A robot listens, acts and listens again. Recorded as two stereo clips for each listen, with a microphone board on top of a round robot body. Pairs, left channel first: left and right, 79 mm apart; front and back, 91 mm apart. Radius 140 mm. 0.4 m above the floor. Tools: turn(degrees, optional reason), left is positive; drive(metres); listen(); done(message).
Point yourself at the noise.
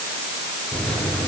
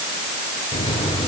turn(degrees=10, reason="The microwave: 10° left.")
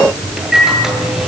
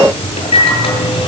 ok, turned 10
done("Facing the microwave.")